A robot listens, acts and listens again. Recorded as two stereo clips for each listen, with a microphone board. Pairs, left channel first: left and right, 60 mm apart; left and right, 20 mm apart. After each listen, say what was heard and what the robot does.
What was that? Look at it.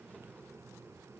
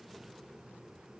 Keep listening.
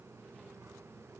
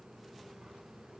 Keep listening.
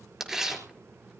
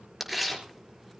Turn 30° right.
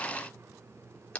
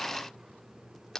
So it is at 20° left. Turn 20° left.
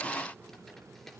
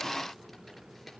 Keep listening.
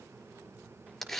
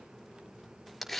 Found it: tearing paper, straight ahead, over 4 m away.